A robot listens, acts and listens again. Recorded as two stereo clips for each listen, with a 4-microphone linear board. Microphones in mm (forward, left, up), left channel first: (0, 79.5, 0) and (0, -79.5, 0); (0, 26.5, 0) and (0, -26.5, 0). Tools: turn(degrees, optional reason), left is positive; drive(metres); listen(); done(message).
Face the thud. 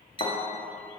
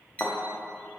turn(degrees=55, reason="The thud: about 55° left or 125° left.")
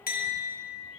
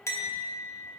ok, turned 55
listen()
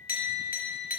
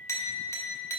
done("I heard a thud, but can't make it out now. It was about straight ahead or 70° left.")